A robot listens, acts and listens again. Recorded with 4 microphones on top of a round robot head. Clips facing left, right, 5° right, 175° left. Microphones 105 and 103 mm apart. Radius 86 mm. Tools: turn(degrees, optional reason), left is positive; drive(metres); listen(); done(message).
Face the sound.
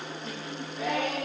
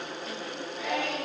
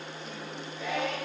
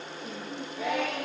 turn(degrees=140, reason="The singing: 140° left.")
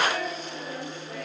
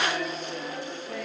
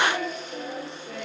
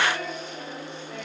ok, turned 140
turn(degrees=-40, reason="The singing is now 40° right.")
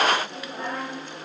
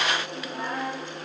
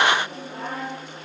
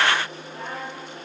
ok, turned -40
done("Found it: singing, straight ahead, over 4 m away.")